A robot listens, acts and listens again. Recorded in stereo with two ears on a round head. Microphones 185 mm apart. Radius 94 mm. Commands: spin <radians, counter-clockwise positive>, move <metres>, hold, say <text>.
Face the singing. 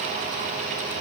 hold
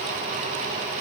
hold
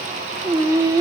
spin -0.26
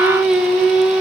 say Facing the singing, 1 to 2 m away.